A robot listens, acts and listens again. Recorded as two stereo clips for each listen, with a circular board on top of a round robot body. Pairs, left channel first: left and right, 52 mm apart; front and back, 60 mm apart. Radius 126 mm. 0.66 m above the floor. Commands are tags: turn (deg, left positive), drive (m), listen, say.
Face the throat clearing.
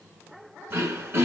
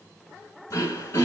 <turn deg="-45"/>
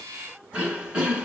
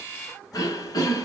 <turn deg="-20"/>
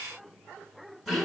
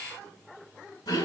<say>Found it: throat clearing, straight ahead, 1 to 2 m away.</say>